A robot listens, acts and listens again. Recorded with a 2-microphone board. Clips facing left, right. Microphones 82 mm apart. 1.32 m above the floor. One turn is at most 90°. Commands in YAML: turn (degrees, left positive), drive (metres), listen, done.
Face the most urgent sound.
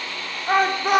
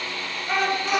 turn: 50
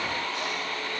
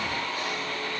listen: true
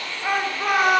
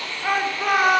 done: "Facing the shout."